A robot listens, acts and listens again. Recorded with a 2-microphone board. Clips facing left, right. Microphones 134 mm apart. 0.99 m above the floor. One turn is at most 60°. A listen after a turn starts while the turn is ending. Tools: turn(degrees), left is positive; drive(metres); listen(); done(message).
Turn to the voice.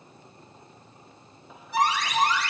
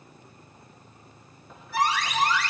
listen()
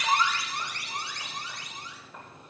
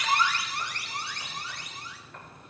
listen()
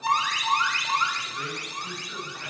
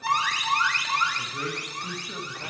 turn(degrees=-35)
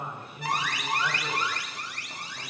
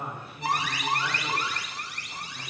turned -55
listen()
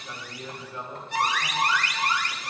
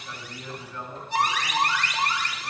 turn(degrees=20)
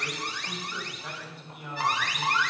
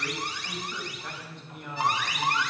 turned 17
done("Found it: a man speaking, straight ahead, over 4 m away.")